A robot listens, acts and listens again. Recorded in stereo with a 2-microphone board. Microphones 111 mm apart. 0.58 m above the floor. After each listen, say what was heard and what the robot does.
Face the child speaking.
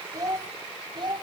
The child speaking: about 45° right or 135° right. Turn 45° right.
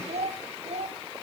So it is at 105° right. Turn 105° right.
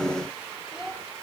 Found it: a child speaking, straight ahead, 2 to 4 m away.